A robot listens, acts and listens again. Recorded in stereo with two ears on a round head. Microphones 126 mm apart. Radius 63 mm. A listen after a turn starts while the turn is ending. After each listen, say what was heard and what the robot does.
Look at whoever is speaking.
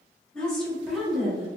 Turn 30° right.
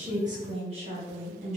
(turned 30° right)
So it is at 125° right. Turn 125° right.
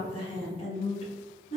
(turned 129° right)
The woman speaking is now 50° left. Turn 50° left.
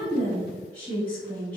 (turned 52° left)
The woman speaking is now 10° left. Turn 10° left.
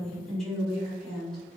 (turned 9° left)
Found it: a woman speaking, straight ahead.